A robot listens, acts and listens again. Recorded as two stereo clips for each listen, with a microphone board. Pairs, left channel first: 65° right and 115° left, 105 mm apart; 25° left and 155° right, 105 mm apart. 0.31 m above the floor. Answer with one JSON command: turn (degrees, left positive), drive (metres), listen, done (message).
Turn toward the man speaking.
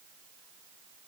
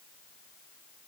{"listen": true}
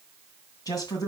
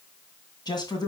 {"turn": -20}
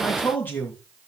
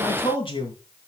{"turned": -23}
{"done": "Found it: a man speaking, straight ahead."}